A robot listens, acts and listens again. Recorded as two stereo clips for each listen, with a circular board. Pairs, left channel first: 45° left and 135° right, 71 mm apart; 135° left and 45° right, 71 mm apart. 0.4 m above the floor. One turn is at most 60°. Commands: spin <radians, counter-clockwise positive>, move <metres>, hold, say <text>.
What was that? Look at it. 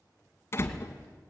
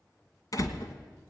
spin 1.05
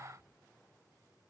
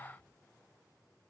spin 0.70
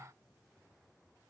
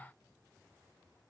say Facing where the door slam came from. I can't hear it now.